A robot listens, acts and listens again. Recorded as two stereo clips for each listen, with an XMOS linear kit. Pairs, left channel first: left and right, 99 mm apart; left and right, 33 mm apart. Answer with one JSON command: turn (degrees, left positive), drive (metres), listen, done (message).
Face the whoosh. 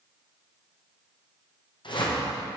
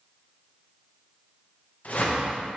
{"turn": 55}
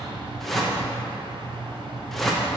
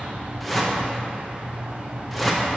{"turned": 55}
{"done": "Found it: a whoosh, straight ahead."}